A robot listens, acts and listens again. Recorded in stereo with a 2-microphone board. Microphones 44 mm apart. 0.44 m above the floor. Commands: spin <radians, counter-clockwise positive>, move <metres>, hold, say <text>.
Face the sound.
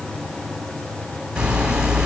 spin -0.35
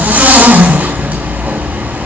spin -2.44
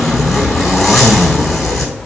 say Found it: a zipper, straight ahead, 2 to 4 m away.